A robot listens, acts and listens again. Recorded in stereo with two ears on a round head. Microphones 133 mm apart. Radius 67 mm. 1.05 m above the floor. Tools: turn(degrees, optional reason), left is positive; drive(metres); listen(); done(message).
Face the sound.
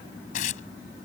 turn(degrees=60, reason="The tearing paper: about 60° left or 120° left.")
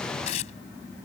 turn(degrees=55, reason="So it is at 55° left.")
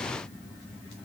listen()
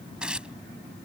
done("Found it: tearing paper, straight ahead.")